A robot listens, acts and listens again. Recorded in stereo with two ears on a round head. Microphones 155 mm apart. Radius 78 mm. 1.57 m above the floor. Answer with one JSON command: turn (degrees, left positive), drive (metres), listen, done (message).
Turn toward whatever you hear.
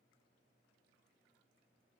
{"listen": true}
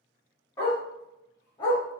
{"turn": 25}
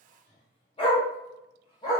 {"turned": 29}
{"turn": 25}
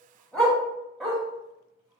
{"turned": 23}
{"done": "Found it: a dog barking, straight ahead, 1 to 2 m away."}